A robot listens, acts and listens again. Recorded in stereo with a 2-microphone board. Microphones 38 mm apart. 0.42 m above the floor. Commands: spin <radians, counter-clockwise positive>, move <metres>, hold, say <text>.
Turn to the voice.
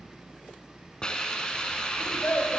spin 0.96
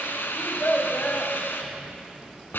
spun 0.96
spin 1.05
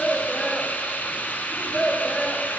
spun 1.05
spin 0.26
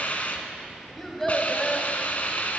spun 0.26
say Facing the child speaking.